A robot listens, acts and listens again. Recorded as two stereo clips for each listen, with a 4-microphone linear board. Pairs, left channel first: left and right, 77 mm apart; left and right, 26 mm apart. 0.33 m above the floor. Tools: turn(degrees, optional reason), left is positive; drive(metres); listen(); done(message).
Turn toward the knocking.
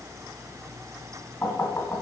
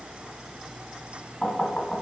turn(degrees=35, reason="The knocking: about 35° left or 145° left.")
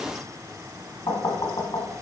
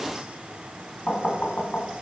turn(degrees=105, reason="So it is at 105° left.")
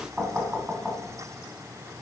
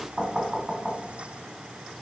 turn(degrees=-15, reason="The knocking is now 15° right.")
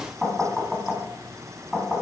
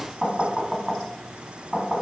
done("Found it: knocking, straight ahead, 2 to 4 m away.")